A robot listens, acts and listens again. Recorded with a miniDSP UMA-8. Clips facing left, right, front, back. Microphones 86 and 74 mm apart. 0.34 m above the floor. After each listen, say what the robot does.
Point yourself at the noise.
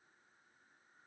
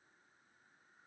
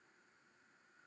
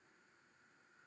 Keep listening.
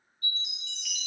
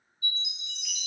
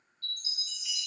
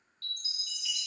Turn 175° right.
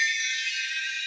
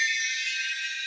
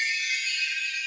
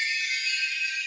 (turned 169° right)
Found it: a chime, straight ahead, 2 to 4 m away.